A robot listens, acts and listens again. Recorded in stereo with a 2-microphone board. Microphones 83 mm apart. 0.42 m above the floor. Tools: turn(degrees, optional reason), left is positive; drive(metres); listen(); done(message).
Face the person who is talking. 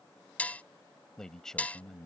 turn(degrees=30)
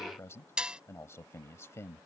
turn(degrees=145, reason="So it is at 145° left.")
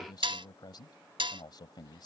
turn(degrees=65, reason="The man speaking is now 65° left.")
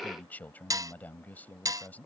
turn(degrees=20, reason="The man speaking is now 20° left.")
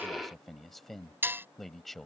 done("Found it: a man speaking, straight ahead.")